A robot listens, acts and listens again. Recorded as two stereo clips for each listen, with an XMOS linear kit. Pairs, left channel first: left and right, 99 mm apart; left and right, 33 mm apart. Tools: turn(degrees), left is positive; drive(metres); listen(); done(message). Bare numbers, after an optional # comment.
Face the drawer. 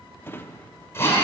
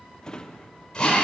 # The drawer: about 25° left or 155° left.
turn(25)
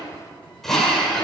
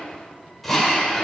listen()
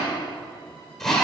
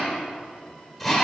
listen()
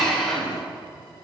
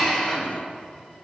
done("I heard a drawer, but can't make it out now. It was about straight ahead or 130° left.")